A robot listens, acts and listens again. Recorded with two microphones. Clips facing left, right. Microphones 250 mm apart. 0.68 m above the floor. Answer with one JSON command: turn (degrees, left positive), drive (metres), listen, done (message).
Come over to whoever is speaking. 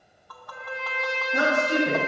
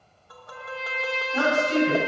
{"turn": 65}
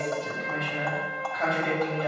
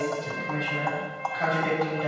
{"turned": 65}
{"drive": 1.0}
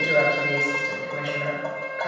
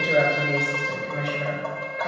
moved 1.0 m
{"drive": 1.0}
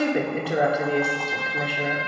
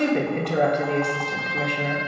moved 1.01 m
{"drive": 1.0}
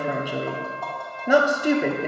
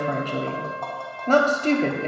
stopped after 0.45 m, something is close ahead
{"turn": 15}
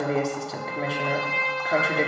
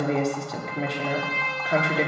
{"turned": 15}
{"done": "I am next to the woman speaking."}